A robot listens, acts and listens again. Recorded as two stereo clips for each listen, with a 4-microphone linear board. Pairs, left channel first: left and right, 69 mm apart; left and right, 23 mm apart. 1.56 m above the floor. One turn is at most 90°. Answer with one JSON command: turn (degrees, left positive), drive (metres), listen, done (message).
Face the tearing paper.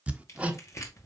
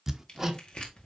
{"turn": 45}
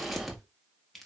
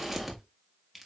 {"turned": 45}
{"done": "Facing the tearing paper, 1 to 2 m away."}